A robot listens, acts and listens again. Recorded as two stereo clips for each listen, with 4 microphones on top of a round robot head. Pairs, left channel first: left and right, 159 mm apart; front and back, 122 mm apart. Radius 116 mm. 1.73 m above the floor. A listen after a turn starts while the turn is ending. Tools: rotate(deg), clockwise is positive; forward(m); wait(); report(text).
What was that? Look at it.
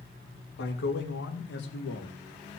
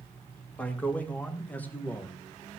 rotate(-75)
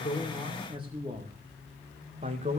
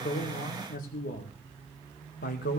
rotate(25)
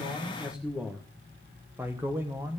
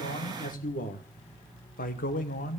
rotate(10)
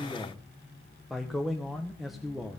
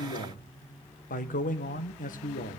report("Found it: a man speaking, straight ahead.")